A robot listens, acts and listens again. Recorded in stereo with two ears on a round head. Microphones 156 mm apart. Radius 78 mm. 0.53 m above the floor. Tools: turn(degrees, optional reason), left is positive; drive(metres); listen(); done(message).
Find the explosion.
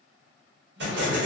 turn(degrees=-70, reason="The explosion: about 70° right or 110° right.")
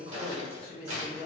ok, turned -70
listen()
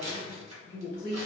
done("I heard an explosion, but can't make it out now. It was about straight ahead or 40° right.")